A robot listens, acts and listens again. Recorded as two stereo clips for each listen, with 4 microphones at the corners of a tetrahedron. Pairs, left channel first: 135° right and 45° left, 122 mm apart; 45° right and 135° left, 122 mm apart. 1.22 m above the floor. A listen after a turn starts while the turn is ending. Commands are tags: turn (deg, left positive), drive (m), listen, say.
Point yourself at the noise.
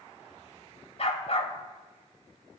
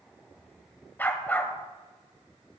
<turn deg="-120"/>
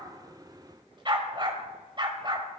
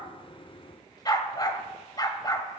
<say>Found it: a dog barking, straight ahead, 1 to 2 m away.</say>